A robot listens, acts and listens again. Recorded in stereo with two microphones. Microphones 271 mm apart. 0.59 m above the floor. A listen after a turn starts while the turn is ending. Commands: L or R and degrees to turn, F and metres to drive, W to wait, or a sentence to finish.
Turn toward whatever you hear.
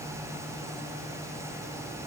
W
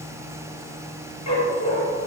L90
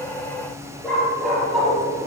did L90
Found it: a dog barking, straight ahead.